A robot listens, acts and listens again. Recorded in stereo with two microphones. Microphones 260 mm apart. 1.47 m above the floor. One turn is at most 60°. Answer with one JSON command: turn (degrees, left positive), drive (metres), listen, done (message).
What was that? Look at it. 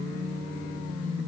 {"listen": true}
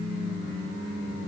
{"listen": true}
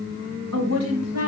{"turn": -60}
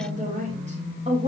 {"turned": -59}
{"turn": -25}
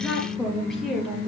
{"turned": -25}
{"done": "Facing the woman speaking, over 4 m away."}